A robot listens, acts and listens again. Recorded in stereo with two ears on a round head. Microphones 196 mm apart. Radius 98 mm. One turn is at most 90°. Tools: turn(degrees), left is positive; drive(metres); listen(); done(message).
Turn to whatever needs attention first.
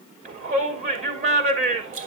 turn(degrees=-35)
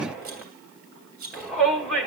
done("Found it: a shout, straight ahead, over 4 m away.")